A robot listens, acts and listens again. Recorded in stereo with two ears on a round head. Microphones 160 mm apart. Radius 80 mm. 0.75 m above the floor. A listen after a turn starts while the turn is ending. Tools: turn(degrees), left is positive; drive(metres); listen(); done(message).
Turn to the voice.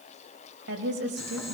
turn(degrees=-75)
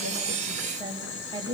turn(degrees=-25)
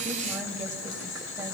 listen()
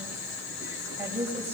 turn(degrees=-15)
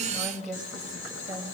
done("Facing the woman speaking, over 4 m away.")